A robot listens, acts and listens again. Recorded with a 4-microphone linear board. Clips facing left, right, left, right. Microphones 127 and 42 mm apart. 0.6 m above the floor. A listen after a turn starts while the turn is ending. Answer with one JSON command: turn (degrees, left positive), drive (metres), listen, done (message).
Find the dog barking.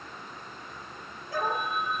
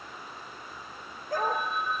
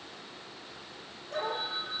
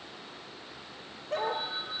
{"turn": -45}
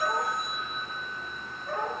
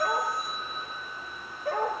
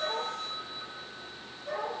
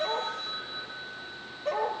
{"turn": -90}
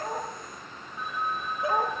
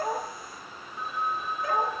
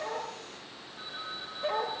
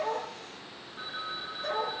{"turn": 25}
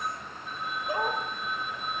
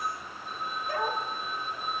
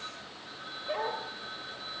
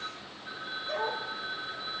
{"turn": 20}
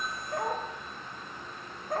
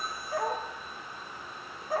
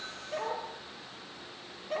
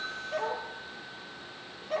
{"done": "Facing the dog barking, over 4 m away."}